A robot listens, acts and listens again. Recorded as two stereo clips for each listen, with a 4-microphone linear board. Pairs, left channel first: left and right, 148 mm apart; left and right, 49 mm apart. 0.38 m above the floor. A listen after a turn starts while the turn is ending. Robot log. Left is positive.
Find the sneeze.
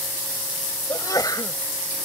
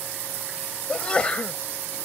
note: The sneeze: about 25° left or 155° left.
cmd yaw +25
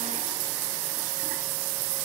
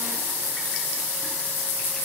cmd idle
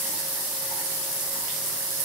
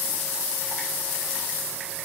end: I heard a sneeze, but can't make it out now. It was about straight ahead or 130° left.